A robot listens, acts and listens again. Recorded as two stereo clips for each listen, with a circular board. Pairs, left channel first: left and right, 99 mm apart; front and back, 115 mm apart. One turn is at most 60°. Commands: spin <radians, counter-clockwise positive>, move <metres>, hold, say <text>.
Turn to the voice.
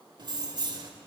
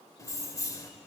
hold
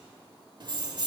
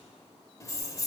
hold
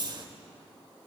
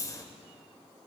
say I can't make out anyone speaking, only keys jangling.